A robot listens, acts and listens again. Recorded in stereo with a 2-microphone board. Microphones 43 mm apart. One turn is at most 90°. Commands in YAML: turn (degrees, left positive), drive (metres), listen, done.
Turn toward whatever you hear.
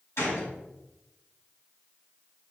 turn: 75
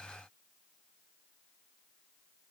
listen: true
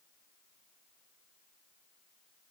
done: "I heard a gunshot, but can't make it out now. It was about straight ahead or 30° left."